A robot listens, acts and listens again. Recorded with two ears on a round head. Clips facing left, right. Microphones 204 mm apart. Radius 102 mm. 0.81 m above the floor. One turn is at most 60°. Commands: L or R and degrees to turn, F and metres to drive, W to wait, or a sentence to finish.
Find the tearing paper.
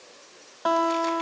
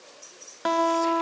W
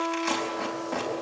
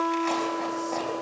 L15
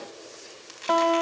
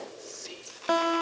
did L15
L60
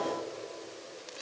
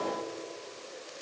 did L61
L60
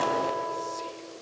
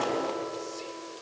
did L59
L30
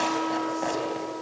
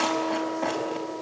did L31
Found it: tearing paper, straight ahead, over 4 m away.